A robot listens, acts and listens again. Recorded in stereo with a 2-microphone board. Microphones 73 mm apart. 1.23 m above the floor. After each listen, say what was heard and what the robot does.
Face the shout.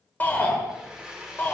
The shout: about 25° left or 155° left. Turn 25° left.
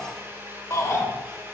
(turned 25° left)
So it is at 130° left. Turn 130° left.
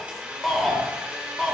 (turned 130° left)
Facing the shout.